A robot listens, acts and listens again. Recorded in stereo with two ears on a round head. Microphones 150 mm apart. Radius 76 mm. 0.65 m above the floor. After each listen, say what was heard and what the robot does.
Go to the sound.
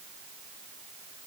Keep listening.
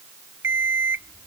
Turn 30° right.
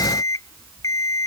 So it is at 20° left. Turn 20° left.
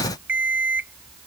The alarm clock is now 10° right. Turn 10° right.
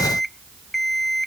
Drive 1.0 m forward.
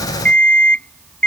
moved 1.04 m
Drive 1.0 m forward.
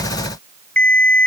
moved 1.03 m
Drive 1.0 m forward.
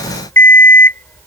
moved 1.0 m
The alarm clock is now 15° left. Turn 15° left.
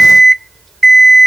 Drive 1.0 m forward.
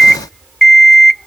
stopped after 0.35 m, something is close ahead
Arrived at the alarm clock, straight ahead.